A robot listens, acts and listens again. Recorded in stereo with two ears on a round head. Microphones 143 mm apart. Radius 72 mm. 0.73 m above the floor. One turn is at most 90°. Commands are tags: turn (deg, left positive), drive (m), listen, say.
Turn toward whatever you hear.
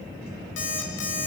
<turn deg="90"/>
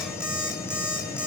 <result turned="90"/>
<say>Found it: an alarm clock, straight ahead, 2 to 4 m away.</say>